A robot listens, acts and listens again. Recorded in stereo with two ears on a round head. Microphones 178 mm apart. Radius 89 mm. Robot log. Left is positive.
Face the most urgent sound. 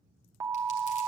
cmd yaw -30
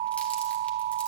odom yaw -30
note: So it is at 135° right.
cmd yaw -135
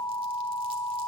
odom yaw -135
note: The alarm is now 25° left.
cmd yaw +25
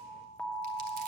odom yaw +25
end: Facing the alarm, 1 to 2 m away.